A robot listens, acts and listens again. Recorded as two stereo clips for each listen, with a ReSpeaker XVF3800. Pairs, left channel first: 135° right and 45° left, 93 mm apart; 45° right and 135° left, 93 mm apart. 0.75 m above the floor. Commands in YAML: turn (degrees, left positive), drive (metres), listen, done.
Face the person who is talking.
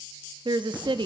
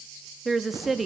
turn: 45
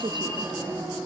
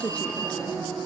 turn: 30
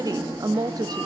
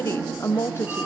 turn: 10
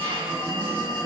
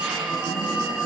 listen: true
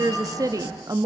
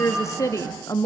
done: "Found it: a woman speaking, straight ahead, under 1 m away."